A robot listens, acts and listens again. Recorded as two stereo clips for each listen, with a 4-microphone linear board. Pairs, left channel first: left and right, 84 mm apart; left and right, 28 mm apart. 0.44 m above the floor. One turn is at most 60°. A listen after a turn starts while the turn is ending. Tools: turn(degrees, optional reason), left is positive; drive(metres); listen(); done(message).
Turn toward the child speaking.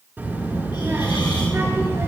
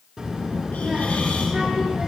turn(degrees=-35, reason="The child speaking: about 35° right or 145° right.")
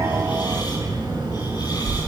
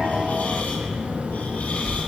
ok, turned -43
turn(degrees=-60, reason="So it is at 100° right.")
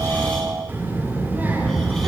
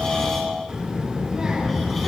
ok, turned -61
turn(degrees=-25, reason="The child speaking is now 25° right.")
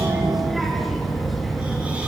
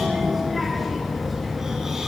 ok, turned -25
done("Found it: a child speaking, straight ahead, over 4 m away.")